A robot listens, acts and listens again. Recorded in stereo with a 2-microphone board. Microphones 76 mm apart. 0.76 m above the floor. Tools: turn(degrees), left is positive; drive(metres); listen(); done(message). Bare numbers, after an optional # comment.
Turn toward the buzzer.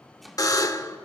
# The buzzer: about 50° left or 130° left.
turn(50)
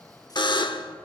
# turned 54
# So it is at 75° left.
turn(75)
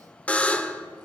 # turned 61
# The buzzer is now 15° left.
turn(15)
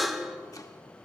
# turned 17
done("Found it: a buzzer, straight ahead.")